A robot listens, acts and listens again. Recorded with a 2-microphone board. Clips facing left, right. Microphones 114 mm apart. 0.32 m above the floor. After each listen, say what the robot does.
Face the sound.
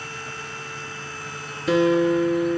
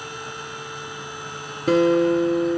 Turn 45° right.
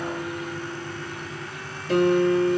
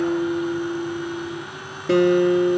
Turn 90° right.
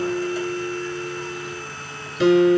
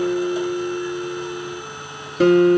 Turn 50° right.
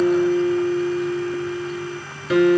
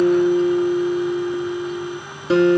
Turn 30° right.
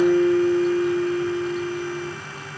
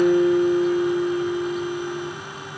Facing the guitar, 2 to 4 m away.